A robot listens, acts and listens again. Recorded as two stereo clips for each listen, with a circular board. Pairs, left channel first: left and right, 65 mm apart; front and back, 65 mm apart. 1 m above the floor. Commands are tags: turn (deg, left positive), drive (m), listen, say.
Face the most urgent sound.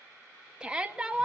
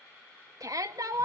<turn deg="-165"/>
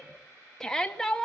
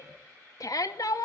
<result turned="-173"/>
<turn deg="10"/>
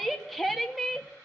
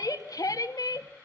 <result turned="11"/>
<say>Found it: a shout, straight ahead, 2 to 4 m away.</say>